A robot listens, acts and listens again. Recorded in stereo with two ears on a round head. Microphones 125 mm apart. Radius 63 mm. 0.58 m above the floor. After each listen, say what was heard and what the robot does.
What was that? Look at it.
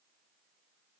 Keep listening.
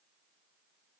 Keep listening.
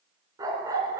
The dog barking: about 25° right or 155° right. Turn 25° right.
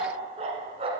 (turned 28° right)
So it is at 140° right. Turn 140° right.
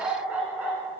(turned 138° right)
The dog barking is now 10° right. Turn 10° right.
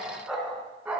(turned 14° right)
The dog barking is now 10° right. Turn 10° right.
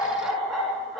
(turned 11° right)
Facing the dog barking.